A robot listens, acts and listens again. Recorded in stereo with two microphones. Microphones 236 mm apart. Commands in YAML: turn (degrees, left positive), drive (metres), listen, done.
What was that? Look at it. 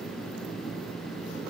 listen: true
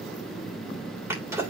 turn: -30
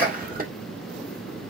turn: -140
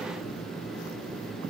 done: "I heard a sneeze from this way, but can't make it out now."